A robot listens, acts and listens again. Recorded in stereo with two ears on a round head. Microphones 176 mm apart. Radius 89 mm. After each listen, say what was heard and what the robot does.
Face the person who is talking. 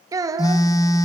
The child speaking: about 20° right or 160° right. Turn 20° right.
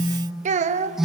So it is at 140° right. Turn 140° right.
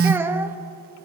The child speaking is now 10° right. Turn 10° right.
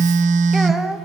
Facing the child speaking.